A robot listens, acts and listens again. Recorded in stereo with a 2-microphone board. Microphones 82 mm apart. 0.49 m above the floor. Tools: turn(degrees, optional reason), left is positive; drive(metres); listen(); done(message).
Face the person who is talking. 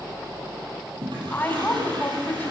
turn(degrees=20, reason="The woman speaking: about 20° left or 160° left.")
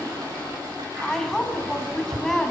done("Found it: a woman speaking, straight ahead, over 4 m away.")